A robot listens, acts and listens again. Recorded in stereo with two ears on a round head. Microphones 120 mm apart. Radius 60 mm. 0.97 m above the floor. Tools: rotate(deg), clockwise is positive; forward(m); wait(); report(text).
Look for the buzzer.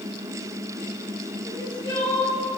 wait()
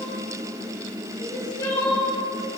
wait()
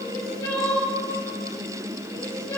report("I can't make out a buzzer to turn to.")